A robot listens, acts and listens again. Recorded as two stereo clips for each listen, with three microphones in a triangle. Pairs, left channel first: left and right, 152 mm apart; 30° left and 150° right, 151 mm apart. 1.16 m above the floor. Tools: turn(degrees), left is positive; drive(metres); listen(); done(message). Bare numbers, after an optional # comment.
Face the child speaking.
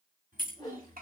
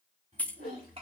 # The child speaking: 100° right.
turn(-100)
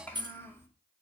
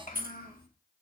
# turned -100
# The child speaking is now 15° left.
turn(15)
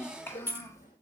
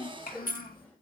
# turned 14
# The child speaking is now 20° left.
turn(20)
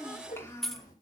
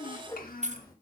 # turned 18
# The child speaking is now 25° left.
turn(25)
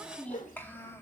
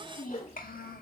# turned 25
# The child speaking is now 20° left.
turn(20)
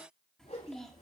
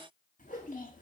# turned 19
done("Found it: a child speaking, straight ahead.")